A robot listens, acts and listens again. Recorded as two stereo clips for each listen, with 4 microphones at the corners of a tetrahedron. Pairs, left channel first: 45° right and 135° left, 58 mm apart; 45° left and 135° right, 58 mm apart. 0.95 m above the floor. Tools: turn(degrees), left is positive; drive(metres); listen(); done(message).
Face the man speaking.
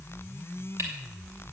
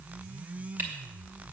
listen()
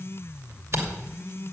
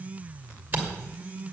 listen()
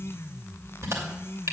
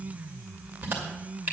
done("I can't make out a man speaking to turn to.")